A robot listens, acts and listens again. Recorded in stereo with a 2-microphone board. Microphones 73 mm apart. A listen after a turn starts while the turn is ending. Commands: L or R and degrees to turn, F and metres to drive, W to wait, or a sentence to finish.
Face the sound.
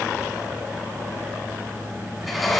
L30
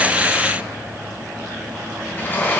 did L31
L145
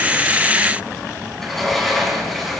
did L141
Found it: a sliding door, straight ahead.